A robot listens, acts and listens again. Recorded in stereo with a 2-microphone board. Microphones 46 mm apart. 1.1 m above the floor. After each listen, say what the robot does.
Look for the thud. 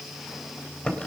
Keep listening.
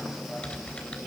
Keep listening.
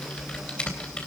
I can't make out a thud to turn to.